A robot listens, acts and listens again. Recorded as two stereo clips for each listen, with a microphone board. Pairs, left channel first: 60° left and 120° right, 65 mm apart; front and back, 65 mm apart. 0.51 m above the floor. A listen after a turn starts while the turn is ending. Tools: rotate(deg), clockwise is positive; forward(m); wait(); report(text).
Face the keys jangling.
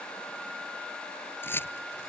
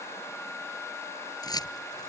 report("Facing the keys jangling.")